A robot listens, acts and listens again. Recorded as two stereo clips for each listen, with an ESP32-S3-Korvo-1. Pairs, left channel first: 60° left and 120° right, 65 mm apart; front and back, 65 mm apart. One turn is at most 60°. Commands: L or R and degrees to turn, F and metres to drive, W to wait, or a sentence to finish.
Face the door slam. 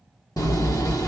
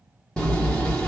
L60
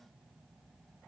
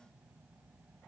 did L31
L45
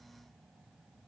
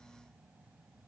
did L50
Facing where the door slam came from. I can't hear it now.